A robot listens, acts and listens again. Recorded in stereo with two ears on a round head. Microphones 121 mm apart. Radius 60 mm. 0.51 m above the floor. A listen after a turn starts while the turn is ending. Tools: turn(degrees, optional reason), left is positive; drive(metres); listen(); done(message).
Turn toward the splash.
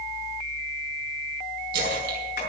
turn(degrees=-75, reason="The splash: about 75° right or 105° right.")
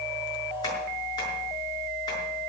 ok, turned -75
listen()
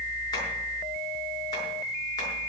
done("I heard a splash, but can't make it out now. It was about straight ahead or 30° right.")